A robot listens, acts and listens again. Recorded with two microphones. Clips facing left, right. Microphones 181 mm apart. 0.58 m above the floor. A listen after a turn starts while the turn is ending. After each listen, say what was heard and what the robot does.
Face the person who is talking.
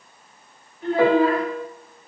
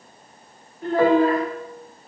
The child speaking: about 40° right or 140° right. Turn 40° right.
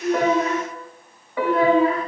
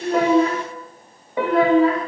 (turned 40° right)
So it is at 100° right. Turn 100° right.
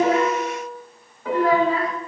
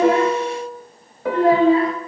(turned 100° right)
The child speaking is now 30° right. Turn 30° right.
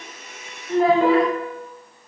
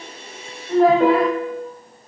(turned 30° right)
Found it: a child speaking, straight ahead, under 1 m away.